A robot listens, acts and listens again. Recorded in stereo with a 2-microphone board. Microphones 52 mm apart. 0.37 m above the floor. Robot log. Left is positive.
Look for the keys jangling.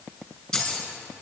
note: The keys jangling: about 15° left or 165° left.
cmd yaw +15
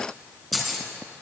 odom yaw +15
end: Found it: keys jangling, straight ahead, 2 to 4 m away.